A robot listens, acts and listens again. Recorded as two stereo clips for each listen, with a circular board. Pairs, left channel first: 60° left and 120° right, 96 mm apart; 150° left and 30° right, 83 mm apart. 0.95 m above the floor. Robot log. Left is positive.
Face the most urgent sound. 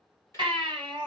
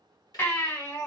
note: The baby crying: 155° right.
cmd yaw -155
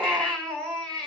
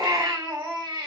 note: The baby crying is now 25° right.
cmd yaw -25
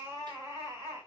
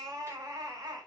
end: Facing the baby crying, 2 to 4 m away.